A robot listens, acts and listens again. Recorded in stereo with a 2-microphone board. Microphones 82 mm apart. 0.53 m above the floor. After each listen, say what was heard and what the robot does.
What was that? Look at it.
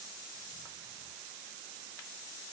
Keep listening.
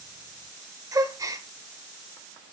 The gasp: about 45° right or 135° right. Turn 45° right.
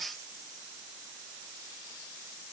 Keep listening.
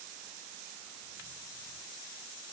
I heard a gasp, but can't make it out now. It was about straight ahead or 90° right.